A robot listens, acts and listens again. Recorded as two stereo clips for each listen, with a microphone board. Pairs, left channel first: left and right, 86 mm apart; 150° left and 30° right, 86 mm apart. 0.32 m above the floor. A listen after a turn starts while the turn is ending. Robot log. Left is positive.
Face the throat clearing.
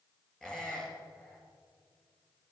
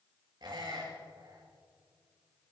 cmd idle
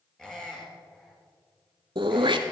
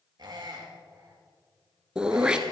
note: The throat clearing: 110° right.
cmd yaw -110
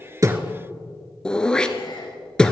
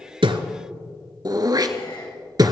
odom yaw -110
note: The throat clearing is now 10° left.
cmd yaw +10
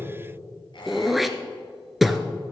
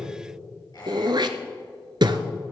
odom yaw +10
end: Facing the throat clearing.